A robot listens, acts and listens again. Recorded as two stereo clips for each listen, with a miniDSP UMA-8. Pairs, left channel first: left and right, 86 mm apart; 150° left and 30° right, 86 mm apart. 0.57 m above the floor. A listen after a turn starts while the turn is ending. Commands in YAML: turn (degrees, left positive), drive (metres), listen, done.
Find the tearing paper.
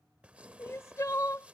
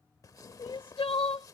turn: -165
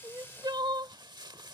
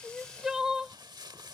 turn: -65
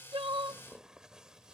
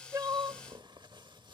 turn: -10
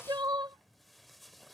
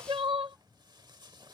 done: "Facing the tearing paper."